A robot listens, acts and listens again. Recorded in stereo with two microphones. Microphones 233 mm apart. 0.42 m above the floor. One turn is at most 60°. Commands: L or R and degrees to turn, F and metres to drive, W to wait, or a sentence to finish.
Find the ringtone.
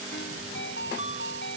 L55
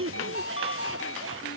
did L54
L60
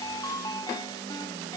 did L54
L15
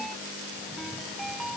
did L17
Found it: a ringtone, straight ahead.